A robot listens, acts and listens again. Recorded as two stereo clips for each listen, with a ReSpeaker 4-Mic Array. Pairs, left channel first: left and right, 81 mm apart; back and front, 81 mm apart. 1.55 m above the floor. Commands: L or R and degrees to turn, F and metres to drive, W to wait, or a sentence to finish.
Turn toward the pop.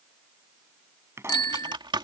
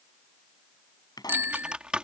R145
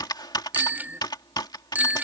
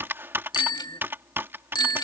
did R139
I heard a pop from this way, but can't make it out now.